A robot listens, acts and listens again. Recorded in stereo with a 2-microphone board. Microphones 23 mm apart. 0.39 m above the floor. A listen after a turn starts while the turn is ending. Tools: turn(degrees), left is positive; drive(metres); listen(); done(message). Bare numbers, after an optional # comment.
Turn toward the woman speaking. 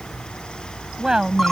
# The woman speaking: about 35° right or 145° right.
turn(-35)
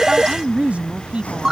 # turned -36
# So it is at 110° right.
turn(-110)
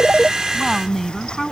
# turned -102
done("Facing the woman speaking.")